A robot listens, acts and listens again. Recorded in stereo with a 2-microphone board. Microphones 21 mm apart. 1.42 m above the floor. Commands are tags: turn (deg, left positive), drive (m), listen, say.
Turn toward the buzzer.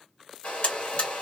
<turn deg="60"/>
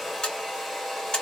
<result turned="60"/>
<turn deg="50"/>
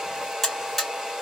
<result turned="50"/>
<turn deg="10"/>
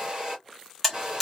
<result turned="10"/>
<say>Found it: a buzzer, straight ahead.</say>